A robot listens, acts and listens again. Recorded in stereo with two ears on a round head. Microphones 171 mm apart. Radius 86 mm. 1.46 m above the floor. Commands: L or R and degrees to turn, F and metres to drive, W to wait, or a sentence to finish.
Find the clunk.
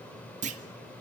R40
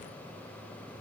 W
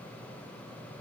I heard a clunk, but can't make it out now. It was about straight ahead or 100° right.